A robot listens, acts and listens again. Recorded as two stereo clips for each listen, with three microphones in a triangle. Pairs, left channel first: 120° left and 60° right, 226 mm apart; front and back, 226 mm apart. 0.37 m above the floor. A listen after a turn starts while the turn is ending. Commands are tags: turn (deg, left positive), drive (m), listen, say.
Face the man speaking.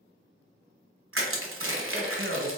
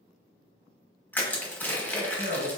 <turn deg="-50"/>
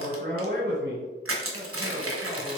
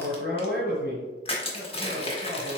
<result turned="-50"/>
<turn deg="-30"/>
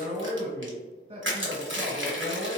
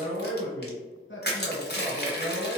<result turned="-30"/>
<say>Found it: a man speaking, straight ahead, 1 to 2 m away.</say>